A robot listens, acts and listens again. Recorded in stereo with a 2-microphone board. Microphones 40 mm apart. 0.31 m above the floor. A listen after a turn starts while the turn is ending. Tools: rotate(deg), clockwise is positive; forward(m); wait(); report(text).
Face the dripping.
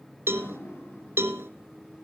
rotate(-65)
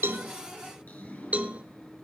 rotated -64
rotate(-45)
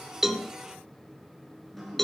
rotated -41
report("Facing the dripping.")